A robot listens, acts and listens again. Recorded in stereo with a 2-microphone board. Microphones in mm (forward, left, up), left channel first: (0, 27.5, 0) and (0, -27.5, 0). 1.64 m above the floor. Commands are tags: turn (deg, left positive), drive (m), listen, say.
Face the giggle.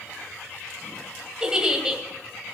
<turn deg="-15"/>
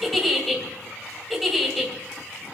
<say>Facing the giggle.</say>